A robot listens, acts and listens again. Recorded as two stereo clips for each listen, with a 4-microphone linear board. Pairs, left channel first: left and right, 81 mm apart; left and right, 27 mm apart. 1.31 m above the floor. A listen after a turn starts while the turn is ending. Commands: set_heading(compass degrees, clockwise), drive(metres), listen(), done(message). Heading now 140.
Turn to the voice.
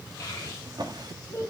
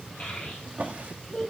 set_heading(105)
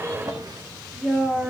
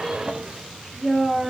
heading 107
set_heading(117)
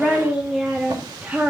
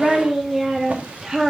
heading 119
set_heading(134)
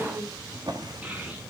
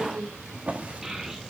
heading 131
set_heading(146)
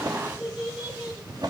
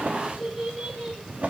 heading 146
set_heading(161)
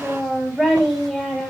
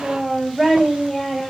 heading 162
done("Facing the child speaking, 2 to 4 m away.")